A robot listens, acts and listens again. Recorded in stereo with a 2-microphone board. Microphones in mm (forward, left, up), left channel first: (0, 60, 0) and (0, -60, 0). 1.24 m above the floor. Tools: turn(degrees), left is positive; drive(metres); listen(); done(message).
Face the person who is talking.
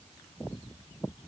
listen()
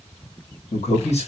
turn(degrees=65)
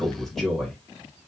done("Found it: a man speaking, straight ahead, 1 to 2 m away.")